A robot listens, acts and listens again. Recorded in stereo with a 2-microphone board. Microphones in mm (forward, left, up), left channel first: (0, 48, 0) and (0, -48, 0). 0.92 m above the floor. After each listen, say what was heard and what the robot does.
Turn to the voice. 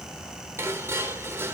Keep listening.
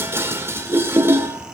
Keep listening.
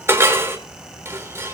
I can't make out anyone speaking, only dishes clattering.